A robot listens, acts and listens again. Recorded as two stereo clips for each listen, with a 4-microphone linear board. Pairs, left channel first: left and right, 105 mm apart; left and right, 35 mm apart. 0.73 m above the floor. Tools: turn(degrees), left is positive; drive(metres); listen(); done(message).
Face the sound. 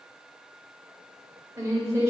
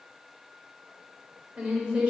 turn(degrees=-30)
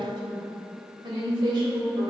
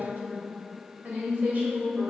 turn(degrees=-135)
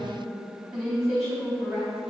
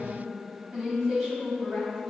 done("Facing the woman speaking.")